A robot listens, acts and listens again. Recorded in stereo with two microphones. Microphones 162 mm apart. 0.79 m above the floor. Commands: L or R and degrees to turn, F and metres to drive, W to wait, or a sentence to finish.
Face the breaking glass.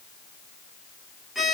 W
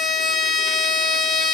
W
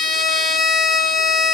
I can't make out breaking glass, only a violin.